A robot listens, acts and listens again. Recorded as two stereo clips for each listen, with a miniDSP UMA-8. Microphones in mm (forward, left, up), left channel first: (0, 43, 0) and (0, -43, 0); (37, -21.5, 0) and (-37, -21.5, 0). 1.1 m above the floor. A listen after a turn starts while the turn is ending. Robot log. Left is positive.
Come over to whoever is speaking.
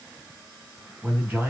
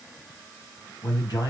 note: The man speaking: 20° right.
cmd yaw -20
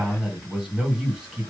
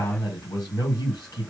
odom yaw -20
note: The man speaking is now 10° right.
cmd yaw -10
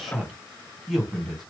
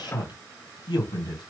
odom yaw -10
cmd fwd 1.0
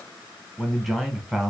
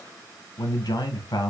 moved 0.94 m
cmd fwd 1.0
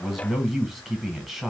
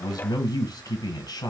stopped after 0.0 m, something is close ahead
end: Arrived at the man speaking, straight ahead.